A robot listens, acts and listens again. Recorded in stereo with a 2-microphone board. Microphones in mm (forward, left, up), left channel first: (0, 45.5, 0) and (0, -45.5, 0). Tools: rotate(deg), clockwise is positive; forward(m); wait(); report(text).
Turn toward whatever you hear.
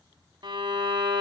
rotate(60)
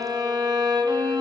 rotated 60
rotate(55)
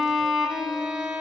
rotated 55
report("Found it: a violin, straight ahead.")